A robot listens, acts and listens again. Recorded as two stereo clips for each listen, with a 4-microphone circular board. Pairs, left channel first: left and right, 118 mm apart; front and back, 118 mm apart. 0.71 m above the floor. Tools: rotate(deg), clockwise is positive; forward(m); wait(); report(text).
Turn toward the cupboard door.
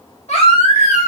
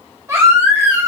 wait()
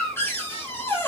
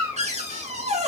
rotate(-160)
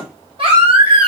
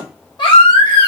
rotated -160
wait()
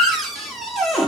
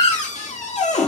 report("Found it: a cupboard door, straight ahead, under 1 m away.")